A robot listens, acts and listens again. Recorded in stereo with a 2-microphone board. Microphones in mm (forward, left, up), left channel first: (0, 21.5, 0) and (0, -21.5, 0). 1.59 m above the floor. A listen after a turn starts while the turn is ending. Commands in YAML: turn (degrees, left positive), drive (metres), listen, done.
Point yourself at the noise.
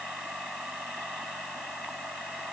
listen: true
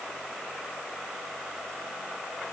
listen: true
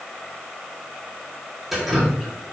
turn: -30
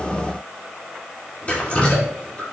turn: 30
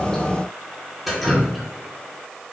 done: "Found it: dripping, straight ahead."